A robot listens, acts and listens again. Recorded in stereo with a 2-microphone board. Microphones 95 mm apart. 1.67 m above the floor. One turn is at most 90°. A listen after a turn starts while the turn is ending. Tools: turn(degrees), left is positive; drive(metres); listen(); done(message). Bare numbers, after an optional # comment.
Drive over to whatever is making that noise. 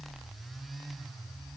listen()
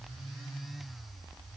listen()
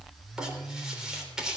turn(-30)
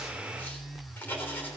# So it is at 20° left.
turn(20)
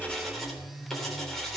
drive(1.0)
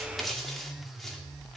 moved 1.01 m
drive(1.0)
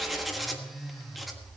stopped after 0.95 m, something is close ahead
done("Arrived at the writing, straight ahead.")